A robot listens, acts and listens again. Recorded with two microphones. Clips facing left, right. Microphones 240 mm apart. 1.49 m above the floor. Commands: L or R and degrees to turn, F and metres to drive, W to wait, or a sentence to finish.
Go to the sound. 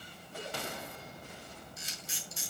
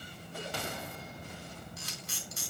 R70
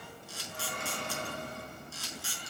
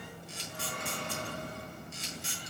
R20
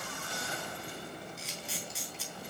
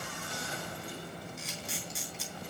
F1.0
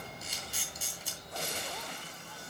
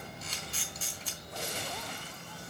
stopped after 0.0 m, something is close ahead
L15
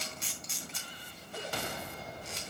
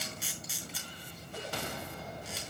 Blocked. The camera shutter is further on, straight ahead.